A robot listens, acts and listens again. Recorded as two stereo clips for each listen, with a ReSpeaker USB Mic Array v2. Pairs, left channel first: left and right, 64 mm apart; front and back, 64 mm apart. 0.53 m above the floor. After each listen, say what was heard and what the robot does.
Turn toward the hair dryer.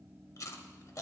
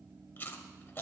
Keep listening.
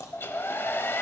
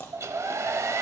The hair dryer: 145° left. Turn 145° left.
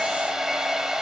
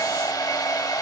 The hair dryer is now 10° right. Turn 10° right.
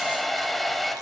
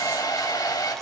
Facing the hair dryer, under 1 m away.